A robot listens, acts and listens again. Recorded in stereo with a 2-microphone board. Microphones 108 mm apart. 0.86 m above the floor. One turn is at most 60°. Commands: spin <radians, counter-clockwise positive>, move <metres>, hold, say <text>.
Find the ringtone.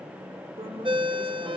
spin -0.87
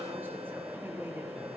hold
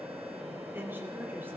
hold
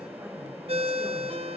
spin -1.05
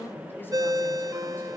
spin -0.61
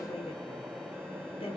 hold
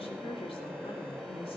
hold
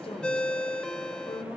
spin 0.17
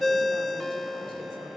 say Found it: a ringtone, straight ahead.